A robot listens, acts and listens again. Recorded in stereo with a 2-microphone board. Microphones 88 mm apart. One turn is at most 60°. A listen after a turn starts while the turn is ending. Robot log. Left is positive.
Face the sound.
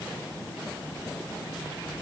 cmd idle
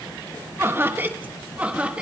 cmd yaw -30
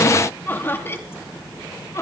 note: So it is at 35° left.
cmd yaw +35
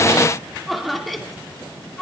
end: Found it: laughter, straight ahead, 2 to 4 m away.